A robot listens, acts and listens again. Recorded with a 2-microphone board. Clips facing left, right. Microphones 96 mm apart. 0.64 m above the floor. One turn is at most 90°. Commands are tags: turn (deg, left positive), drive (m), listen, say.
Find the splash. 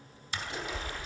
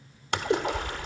<turn deg="-70"/>
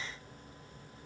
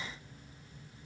<listen/>
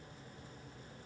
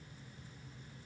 <say>I heard a splash, but can't make it out now. It was about straight ahead or 40° right.</say>